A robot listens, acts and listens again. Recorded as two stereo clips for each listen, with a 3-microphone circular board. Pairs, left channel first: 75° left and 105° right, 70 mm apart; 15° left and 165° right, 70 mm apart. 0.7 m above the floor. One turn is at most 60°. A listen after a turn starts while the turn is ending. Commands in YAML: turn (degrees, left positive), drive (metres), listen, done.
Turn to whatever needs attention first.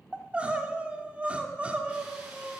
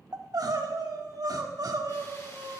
turn: -60
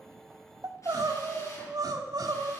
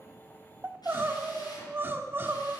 turn: -60
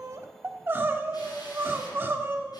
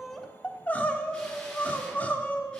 turn: -50
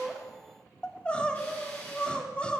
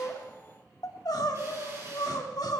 done: "Facing the crying."